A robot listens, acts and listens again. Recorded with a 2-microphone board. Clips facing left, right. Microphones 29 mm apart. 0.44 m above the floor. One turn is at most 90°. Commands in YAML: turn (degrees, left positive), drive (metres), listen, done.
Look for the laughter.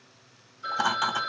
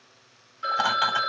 turn: -25
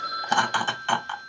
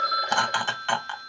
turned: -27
done: "Found it: laughter, straight ahead, 1 to 2 m away."